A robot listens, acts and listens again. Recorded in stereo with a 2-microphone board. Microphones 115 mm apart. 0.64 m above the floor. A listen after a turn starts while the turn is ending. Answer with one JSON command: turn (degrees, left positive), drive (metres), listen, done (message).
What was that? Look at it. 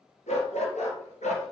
{"turn": 90}
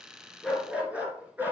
{"turn": -15}
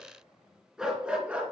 {"turn": -15}
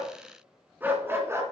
{"turn": -25}
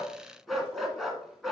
{"done": "Facing the dog barking."}